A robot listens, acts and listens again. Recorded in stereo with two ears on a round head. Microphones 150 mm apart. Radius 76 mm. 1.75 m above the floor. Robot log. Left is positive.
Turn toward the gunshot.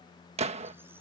note: The gunshot: about 40° right or 140° right.
cmd yaw -40
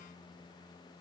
cmd idle
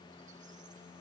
end: I heard a gunshot, but can't make it out now. It was about straight ahead or 100° right.